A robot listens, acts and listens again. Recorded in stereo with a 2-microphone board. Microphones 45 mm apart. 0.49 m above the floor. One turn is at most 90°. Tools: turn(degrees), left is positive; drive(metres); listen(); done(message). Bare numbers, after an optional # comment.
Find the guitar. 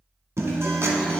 turn(-90)
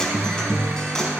# So it is at 15° left.
turn(15)
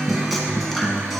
done("Facing the guitar, 1 to 2 m away.")